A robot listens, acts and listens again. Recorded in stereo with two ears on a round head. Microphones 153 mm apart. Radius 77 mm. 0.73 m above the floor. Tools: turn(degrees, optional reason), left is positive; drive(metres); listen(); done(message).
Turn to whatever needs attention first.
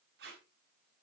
listen()
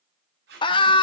turn(degrees=30, reason="The scream: about 30° left or 150° left.")
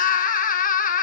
turn(degrees=115, reason="So it is at 115° left.")
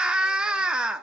done("Facing the scream, 1 to 2 m away.")